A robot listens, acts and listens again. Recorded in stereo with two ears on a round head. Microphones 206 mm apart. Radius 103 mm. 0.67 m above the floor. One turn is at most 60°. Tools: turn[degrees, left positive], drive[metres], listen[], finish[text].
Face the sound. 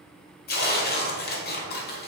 Thought: The tearing paper: about 45° left or 135° left.
Action: turn[45]
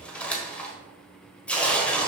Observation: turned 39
Action: finish[Facing the tearing paper, 1 to 2 m away.]